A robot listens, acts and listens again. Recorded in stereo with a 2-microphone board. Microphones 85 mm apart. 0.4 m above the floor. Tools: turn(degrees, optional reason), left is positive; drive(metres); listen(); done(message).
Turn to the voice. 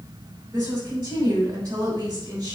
turn(degrees=-35, reason="The woman speaking: about 35° right or 145° right.")
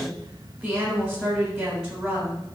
done("Facing the woman speaking.")